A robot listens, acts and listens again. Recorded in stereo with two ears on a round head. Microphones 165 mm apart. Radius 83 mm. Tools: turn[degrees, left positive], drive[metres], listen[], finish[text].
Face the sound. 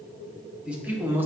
Action: turn[-30]
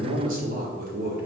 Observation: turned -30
Thought: So it is at 125° right.
Action: turn[-125]
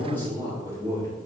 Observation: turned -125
Thought: The man speaking is now 15° left.
Action: turn[15]
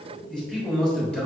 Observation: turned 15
Action: finish[Facing the man speaking, 2 to 4 m away.]